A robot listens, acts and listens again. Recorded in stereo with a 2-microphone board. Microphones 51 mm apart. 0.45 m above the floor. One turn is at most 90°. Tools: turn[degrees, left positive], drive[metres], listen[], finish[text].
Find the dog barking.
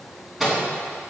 Action: listen[]
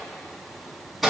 Action: listen[]
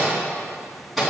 Action: finish[I can't make out a dog barking, only a microwave.]